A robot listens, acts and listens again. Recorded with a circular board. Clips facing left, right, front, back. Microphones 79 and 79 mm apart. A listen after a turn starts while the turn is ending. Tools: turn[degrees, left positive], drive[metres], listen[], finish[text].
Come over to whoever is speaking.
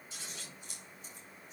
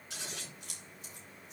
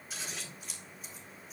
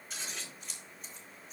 Action: listen[]
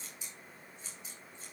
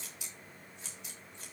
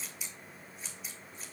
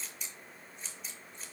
Action: listen[]
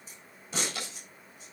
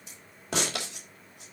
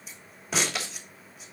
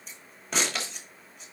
Action: finish[I can't make out anyone speaking to turn to.]